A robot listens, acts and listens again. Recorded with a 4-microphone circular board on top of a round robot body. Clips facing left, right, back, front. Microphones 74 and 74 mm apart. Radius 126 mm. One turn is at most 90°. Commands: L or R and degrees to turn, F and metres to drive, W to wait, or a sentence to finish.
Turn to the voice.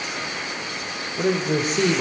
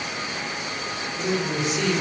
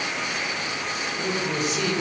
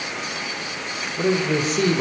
L45
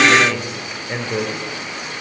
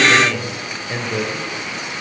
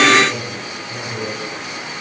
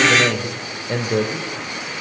L10
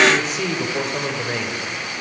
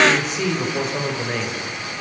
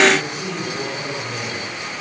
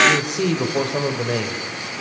Found it: a man speaking, straight ahead, over 4 m away.